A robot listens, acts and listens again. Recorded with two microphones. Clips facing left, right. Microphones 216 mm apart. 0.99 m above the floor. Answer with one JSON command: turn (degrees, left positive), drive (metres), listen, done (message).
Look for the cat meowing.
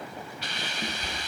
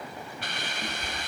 {"turn": 30}
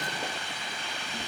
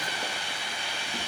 {"listen": true}
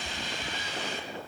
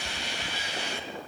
{"turn": -20}
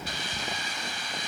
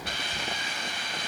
{"done": "Facing the cat meowing, over 4 m away."}